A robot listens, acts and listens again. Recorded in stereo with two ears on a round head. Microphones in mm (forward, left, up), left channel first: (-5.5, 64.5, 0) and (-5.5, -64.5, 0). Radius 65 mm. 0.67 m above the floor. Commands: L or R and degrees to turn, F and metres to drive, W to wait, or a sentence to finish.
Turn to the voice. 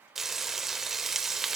W
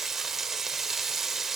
W
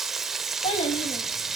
L40
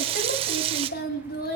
L100
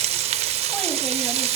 W
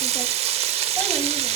W
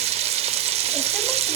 I heard a child speaking from this way, but can't make it out now.